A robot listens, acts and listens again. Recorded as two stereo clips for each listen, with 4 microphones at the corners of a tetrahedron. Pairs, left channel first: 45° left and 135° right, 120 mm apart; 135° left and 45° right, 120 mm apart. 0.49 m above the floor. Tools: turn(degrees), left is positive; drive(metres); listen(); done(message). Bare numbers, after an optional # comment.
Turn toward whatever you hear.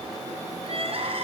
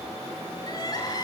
# The crying: 170° right.
turn(-170)
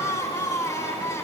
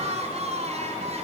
# The crying is now 20° right.
turn(-20)
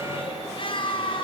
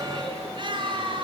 done("Found it: crying, straight ahead.")